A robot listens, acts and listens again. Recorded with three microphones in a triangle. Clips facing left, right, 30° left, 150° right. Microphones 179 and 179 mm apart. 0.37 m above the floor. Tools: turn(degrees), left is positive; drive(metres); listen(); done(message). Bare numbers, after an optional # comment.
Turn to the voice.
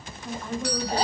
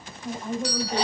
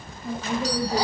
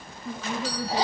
# The woman speaking: 20° right.
turn(-20)
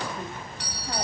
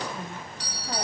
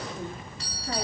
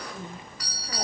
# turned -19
listen()
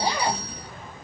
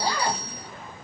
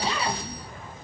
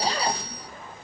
listen()
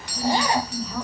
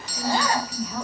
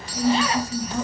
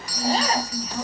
done("Found it: a woman speaking, straight ahead, over 4 m away.")